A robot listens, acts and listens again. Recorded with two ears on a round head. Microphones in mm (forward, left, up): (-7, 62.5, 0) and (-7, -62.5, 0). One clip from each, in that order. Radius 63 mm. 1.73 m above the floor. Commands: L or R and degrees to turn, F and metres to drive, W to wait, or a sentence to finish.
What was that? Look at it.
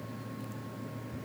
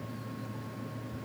W
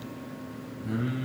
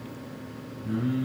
L40
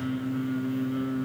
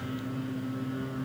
L15
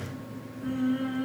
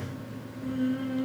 L10
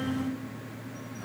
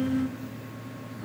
L15
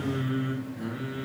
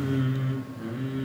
L10
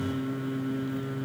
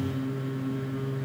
Facing the singing.